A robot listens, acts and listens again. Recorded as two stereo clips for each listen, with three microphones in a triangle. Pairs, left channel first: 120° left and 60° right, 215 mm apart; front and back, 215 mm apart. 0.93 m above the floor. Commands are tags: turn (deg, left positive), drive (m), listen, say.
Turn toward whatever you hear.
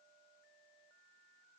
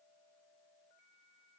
<listen/>
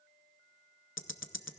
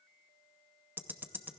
<turn deg="100"/>
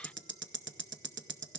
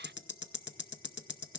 <turn deg="-30"/>
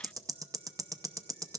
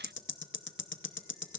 <turn deg="15"/>
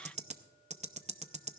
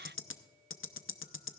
<say>Found it: ticking, straight ahead, under 1 m away.</say>